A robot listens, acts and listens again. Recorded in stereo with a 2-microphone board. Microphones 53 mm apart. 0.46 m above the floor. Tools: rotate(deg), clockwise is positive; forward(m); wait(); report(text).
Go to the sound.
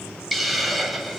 rotate(-30)
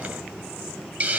rotate(30)
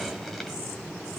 wait()
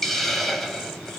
forward(1.0)
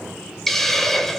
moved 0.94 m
forward(1.0)
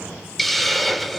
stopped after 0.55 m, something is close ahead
report("Arrived at the hiss, straight ahead.")